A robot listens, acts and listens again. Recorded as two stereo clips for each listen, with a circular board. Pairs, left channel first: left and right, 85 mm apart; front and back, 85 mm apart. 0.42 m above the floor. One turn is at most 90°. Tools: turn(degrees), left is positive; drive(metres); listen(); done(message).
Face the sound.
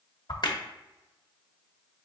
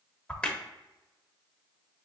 turn(degrees=75)
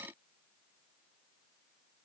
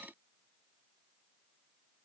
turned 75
done("I heard a crack from this way, but can't make it out now.")